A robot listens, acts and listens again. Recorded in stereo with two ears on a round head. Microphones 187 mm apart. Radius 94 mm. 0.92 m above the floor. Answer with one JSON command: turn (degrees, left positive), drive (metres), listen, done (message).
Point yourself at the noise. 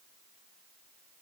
{"listen": true}
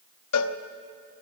{"turn": 90}
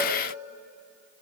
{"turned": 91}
{"listen": true}
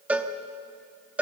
{"done": "Facing the cowbell."}